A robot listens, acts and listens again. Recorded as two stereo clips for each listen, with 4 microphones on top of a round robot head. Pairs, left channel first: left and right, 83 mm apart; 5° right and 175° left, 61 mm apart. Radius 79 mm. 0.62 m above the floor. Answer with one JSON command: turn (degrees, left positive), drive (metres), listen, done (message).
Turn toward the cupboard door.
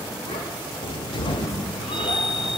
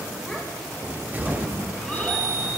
{"turn": 115}
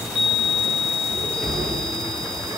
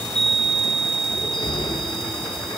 {"done": "Found it: a cupboard door, straight ahead."}